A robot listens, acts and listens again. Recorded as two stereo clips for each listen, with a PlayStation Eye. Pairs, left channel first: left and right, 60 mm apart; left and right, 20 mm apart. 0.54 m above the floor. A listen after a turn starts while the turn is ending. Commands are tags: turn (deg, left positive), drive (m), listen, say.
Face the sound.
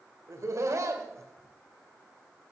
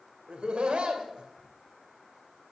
<turn deg="-60"/>
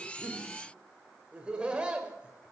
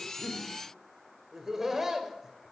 <turn deg="-20"/>
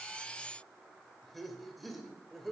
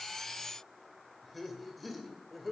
<say>Found it: laughter, straight ahead, 2 to 4 m away.</say>